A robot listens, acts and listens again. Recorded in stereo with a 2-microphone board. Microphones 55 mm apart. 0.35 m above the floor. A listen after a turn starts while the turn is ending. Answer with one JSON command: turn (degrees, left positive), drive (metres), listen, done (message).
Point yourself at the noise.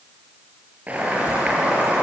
{"turn": -30}
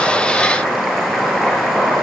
{"done": "Facing the boiling, over 4 m away."}